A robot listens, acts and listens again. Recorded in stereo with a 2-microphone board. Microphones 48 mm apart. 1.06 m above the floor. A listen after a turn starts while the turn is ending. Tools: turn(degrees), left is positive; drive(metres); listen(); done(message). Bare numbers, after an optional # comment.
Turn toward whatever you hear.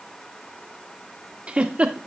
# The giggle: about 30° right or 150° right.
turn(-30)
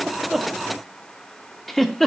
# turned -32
done("Facing the giggle.")